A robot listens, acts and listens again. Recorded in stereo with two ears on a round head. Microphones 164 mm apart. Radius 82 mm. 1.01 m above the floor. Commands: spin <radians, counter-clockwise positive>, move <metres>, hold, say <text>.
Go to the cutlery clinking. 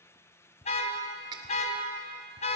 spin -0.44
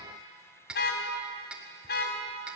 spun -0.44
move 1.0
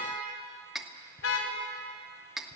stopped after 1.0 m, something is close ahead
say I am next to the cutlery clinking.